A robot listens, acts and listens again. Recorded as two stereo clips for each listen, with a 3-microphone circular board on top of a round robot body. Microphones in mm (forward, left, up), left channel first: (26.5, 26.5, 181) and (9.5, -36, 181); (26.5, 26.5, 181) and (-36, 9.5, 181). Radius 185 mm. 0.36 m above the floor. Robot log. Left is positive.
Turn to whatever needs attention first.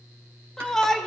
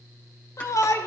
end: Facing the shout, 1 to 2 m away.